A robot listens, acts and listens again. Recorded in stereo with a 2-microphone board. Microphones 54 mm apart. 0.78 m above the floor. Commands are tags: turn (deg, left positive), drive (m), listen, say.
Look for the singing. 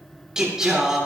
<turn deg="-30"/>
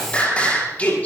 <turn deg="25"/>
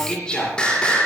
<turn deg="20"/>
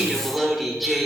<say>Facing the singing.</say>